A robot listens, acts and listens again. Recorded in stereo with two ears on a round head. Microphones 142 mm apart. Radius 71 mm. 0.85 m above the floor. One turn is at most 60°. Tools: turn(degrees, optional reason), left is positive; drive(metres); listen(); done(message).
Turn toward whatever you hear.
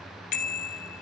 turn(degrees=55, reason="The bicycle bell: about 55° left or 125° left.")
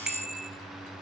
done("Facing the bicycle bell.")